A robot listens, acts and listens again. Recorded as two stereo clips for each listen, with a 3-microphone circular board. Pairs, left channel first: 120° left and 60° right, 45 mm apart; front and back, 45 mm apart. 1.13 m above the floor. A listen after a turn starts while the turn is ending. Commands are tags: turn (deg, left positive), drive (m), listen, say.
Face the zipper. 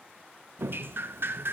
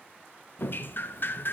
<listen/>
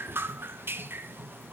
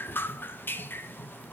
<listen/>
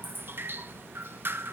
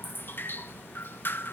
<say>I can't make out a zipper to turn to.</say>